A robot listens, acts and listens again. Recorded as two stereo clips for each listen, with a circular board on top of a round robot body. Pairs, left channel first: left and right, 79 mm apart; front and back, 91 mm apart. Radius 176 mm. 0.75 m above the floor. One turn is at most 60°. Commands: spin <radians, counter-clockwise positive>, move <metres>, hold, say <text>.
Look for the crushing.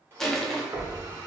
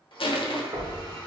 say Found it: crushing, straight ahead.